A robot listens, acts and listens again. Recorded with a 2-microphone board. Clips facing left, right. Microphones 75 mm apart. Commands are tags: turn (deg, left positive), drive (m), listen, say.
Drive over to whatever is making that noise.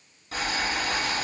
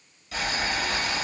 <turn deg="40"/>
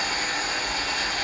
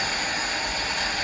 <turn deg="100"/>
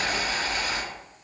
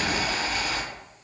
<drive m="1.0"/>
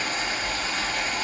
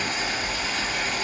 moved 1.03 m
<drive m="1.0"/>
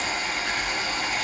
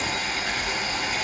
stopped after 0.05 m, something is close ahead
<say>I am next to the boiling.</say>